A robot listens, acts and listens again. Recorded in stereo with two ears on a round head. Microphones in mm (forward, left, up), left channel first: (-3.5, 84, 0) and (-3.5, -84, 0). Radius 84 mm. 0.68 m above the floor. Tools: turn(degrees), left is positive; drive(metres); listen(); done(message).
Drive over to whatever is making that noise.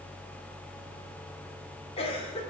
turn(degrees=35)
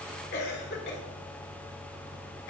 turn(degrees=110)
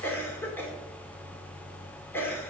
turn(degrees=15)
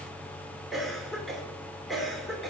drive(metres=1.0)
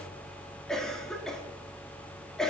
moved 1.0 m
drive(metres=1.0)
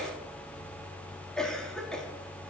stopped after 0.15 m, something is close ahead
done("Arrived at the cough, straight ahead.")